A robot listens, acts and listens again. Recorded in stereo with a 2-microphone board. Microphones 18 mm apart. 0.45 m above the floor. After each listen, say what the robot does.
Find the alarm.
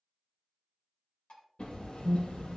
Turn 30° left.
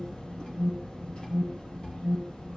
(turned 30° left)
Turn 150° left.
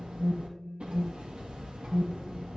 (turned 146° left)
Found it: an alarm, straight ahead, 1 to 2 m away.